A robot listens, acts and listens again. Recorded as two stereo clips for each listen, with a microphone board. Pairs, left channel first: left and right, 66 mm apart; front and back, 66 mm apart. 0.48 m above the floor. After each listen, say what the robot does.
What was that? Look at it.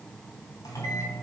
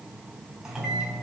Turn 105° left.
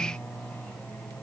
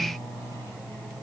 Turn 30° left.
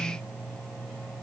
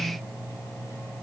Facing the microwave, 2 to 4 m away.